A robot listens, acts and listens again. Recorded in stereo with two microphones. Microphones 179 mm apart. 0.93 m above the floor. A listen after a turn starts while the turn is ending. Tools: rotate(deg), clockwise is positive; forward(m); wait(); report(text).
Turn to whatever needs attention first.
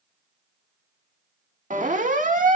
rotate(50)
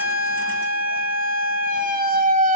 rotate(70)
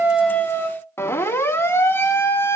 rotate(-15)
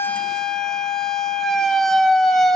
report("Facing the siren.")